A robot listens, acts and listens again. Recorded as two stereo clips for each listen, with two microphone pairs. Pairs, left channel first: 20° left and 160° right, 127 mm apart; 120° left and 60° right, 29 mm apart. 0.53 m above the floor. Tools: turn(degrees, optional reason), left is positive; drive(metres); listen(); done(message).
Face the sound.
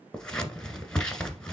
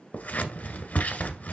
turn(degrees=100, reason="The scissors: 100° left.")
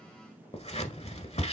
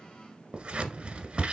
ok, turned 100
turn(degrees=-10, reason="The scissors is now 10° right.")
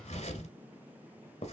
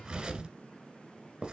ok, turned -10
done("Facing the scissors, 1 to 2 m away.")